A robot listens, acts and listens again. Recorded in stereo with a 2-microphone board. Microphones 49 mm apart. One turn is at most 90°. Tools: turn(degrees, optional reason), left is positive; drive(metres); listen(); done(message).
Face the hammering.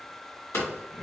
turn(degrees=70, reason="The hammering: about 70° left or 110° left.")
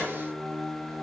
listen()
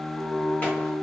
listen()
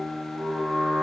done("I heard hammering, but can't make it out now. It was about straight ahead or 40° left.")